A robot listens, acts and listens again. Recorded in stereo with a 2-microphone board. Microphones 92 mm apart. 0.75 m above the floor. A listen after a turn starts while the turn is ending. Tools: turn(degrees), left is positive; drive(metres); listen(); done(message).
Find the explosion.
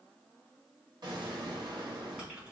turn(degrees=-50)
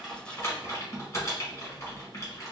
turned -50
listen()
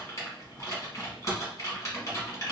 done("I heard an explosion, but can't make it out now. It was about straight ahead or 80° right.")